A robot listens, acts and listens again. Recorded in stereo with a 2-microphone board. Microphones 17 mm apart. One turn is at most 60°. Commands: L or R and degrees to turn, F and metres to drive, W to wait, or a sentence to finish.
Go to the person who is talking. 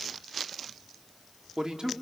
R50
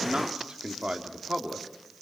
R60
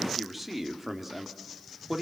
R15
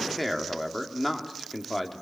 F1.0
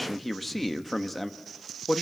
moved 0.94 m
F1.0
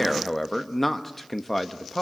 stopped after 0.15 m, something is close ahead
L10
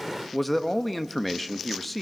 Arrived at the man speaking, straight ahead.